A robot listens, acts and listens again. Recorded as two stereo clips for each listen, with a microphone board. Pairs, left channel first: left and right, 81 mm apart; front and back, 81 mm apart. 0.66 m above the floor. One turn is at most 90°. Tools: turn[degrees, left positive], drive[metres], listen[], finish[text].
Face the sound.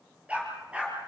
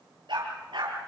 Thought: The dog barking: 165° right.
Action: turn[-90]
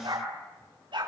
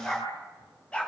Thought: The dog barking is now 75° right.
Action: turn[-75]
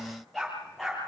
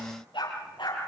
Action: finish[Found it: a dog barking, straight ahead.]